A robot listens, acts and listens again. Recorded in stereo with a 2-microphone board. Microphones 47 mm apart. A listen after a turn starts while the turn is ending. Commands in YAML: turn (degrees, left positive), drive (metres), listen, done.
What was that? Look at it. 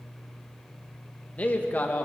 turn: 45
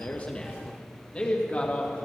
turn: 35
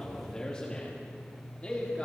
turn: 30
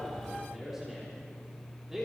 turn: -10
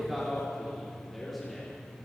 done: "Facing the man speaking."